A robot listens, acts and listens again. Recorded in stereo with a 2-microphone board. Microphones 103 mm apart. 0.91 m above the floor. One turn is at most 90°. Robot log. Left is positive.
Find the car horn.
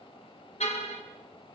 cmd yaw +90
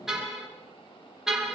end: Found it: a car horn, straight ahead.